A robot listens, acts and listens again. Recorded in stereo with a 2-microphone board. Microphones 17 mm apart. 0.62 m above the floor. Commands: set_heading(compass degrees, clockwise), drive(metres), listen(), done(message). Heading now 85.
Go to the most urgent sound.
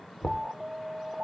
set_heading(135)
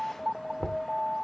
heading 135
set_heading(150)
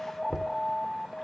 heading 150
drive(1.0)
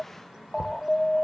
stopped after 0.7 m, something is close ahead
done("I am next to the alarm.")